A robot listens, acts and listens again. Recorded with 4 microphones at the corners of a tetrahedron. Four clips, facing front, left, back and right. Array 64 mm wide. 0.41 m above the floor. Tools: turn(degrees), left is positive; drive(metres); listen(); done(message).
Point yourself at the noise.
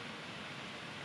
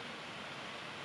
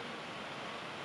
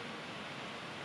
listen()
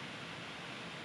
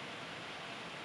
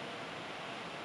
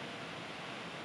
listen()
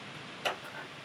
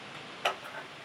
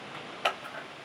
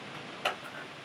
turn(degrees=160)
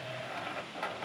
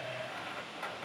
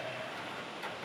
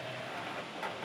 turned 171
turn(degrees=-10)
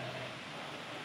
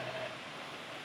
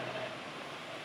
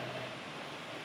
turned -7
listen()
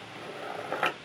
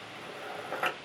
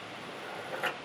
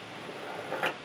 done("Found it: scissors, straight ahead, under 1 m away.")